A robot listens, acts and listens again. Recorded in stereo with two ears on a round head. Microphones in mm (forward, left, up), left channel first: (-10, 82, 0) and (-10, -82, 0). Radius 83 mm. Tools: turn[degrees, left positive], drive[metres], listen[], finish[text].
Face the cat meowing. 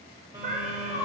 Thought: The cat meowing: about 45° right or 135° right.
Action: turn[-45]
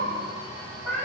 Action: finish[Facing the cat meowing.]